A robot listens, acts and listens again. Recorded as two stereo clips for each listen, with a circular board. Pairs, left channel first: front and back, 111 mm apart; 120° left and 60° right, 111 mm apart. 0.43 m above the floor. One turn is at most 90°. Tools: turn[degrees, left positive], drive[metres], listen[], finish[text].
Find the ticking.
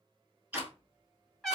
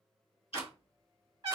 Thought: The ticking: 105° left.
Action: turn[90]
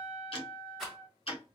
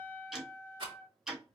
Thought: The ticking is now 25° left.
Action: turn[25]
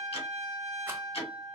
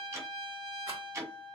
Action: finish[Facing the ticking.]